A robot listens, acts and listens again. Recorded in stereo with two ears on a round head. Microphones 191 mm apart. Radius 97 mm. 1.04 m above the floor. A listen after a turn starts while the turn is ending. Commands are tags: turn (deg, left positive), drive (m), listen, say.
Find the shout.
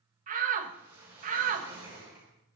<turn deg="-40"/>
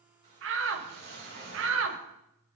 <turn deg="-95"/>
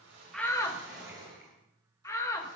<turn deg="15"/>
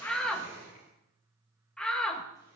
<say>Found it: a shout, straight ahead.</say>